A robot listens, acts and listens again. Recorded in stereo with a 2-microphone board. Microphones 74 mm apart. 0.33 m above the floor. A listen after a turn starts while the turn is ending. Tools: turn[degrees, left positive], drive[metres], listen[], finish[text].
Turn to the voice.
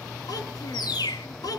Thought: The child speaking: about 60° left or 120° left.
Action: turn[60]
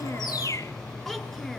Action: finish[Found it: a child speaking, straight ahead, 2 to 4 m away.]